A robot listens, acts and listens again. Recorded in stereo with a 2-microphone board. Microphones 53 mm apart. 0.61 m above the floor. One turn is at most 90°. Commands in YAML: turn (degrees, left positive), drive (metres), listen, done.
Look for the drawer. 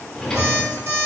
turn: 30
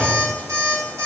turn: -20
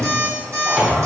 done: "Facing the drawer, 1 to 2 m away."